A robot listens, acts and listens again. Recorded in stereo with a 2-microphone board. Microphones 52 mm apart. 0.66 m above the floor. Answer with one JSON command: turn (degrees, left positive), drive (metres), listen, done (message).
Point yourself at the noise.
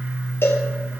{"turn": 55}
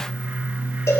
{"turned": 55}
{"turn": 70}
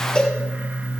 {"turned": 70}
{"turn": 20}
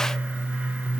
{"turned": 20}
{"done": "Found it: a cowbell, straight ahead."}